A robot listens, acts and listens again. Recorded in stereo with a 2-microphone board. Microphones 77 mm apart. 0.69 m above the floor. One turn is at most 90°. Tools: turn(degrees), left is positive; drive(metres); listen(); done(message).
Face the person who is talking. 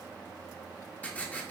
listen()
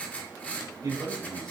turn(degrees=-50)
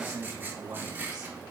turn(degrees=-75)
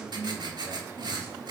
turn(degrees=-30)
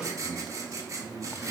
done("Found it: a man speaking, straight ahead.")